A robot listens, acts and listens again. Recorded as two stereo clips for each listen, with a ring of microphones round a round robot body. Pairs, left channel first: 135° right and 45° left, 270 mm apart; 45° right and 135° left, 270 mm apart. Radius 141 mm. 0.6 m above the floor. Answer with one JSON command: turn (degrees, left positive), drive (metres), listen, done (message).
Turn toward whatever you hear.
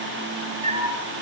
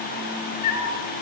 {"turn": -20}
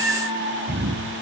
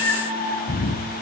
{"done": "Found it: a cat meowing, straight ahead, over 4 m away."}